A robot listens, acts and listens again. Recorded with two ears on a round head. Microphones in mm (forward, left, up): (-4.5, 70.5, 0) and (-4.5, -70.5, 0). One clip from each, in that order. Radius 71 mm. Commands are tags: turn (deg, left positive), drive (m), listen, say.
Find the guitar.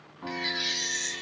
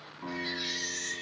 <turn deg="-30"/>
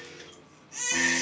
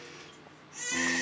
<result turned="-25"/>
<listen/>
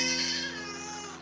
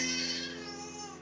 <listen/>
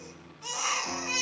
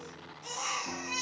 <say>I heard a guitar, but can't make it out now. It was about 15° left or 145° right.</say>